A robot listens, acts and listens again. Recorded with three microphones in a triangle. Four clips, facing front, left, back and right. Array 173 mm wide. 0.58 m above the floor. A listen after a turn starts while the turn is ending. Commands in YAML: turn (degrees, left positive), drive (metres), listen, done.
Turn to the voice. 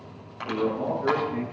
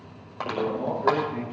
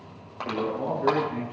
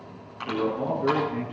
turn: -135
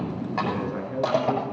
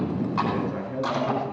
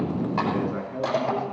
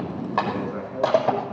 turn: 30
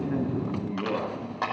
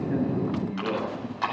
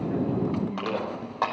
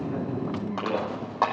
done: "Facing the man speaking."